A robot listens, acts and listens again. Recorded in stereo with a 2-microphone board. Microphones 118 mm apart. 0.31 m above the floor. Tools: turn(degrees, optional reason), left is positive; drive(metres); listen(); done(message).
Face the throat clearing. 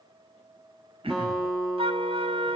turn(degrees=-55, reason="The throat clearing: about 55° right or 125° right.")
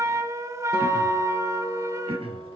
turn(degrees=-65, reason="So it is at 65° right.")
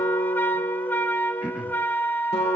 turn(degrees=-10, reason="The throat clearing is now 10° right.")
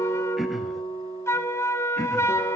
done("Found it: throat clearing, straight ahead.")